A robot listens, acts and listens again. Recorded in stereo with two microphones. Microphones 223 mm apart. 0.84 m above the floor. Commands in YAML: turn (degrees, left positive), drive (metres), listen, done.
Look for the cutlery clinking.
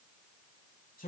listen: true
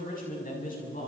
listen: true
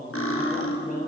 turn: 75
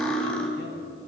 done: "Found it: cutlery clinking, straight ahead."